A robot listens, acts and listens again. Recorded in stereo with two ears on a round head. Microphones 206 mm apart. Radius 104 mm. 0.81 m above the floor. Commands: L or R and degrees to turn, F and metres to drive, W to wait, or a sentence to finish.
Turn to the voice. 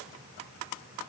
W
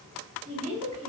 R30
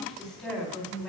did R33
Found it: a woman speaking, straight ahead.